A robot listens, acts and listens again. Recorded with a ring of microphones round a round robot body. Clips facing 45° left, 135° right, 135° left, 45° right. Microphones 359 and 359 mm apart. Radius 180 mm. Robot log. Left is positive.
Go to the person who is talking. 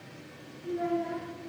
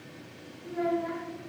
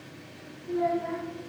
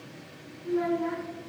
note: The child speaking: 80° right.
cmd yaw -80
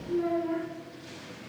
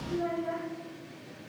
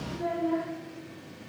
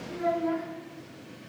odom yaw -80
note: The child speaking is now 30° right.
cmd yaw -30
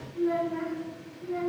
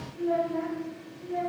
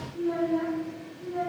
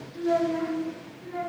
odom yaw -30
cmd fwd 1.0
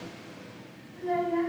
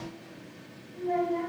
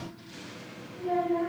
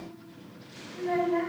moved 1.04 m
cmd fwd 1.0
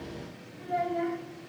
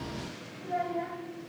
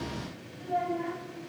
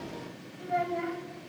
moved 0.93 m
note: The child speaking is now 10° right.
cmd yaw -10
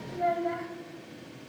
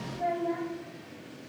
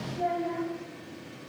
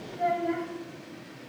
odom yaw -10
cmd fwd 1.0
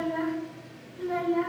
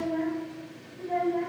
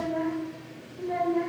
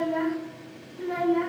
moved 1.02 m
cmd fwd 1.0
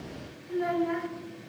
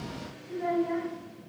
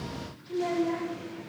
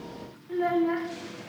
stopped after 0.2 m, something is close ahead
end: Arrived at the child speaking, straight ahead.